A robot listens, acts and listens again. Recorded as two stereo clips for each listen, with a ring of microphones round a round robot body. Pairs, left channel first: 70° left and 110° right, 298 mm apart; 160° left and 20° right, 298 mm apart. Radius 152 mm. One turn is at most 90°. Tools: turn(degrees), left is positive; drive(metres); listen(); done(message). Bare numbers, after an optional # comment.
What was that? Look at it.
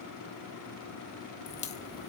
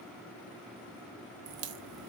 done("Found it: a crack, straight ahead, 1 to 2 m away.")